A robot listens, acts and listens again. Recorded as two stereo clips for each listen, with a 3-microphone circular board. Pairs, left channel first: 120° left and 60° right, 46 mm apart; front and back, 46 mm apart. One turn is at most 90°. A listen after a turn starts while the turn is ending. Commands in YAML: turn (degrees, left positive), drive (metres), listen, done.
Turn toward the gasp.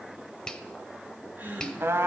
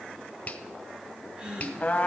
turn: -90
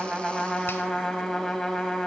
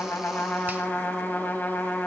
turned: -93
turn: -25
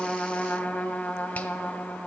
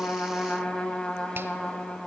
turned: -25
done: "I heard a gasp from this way, but can't make it out now."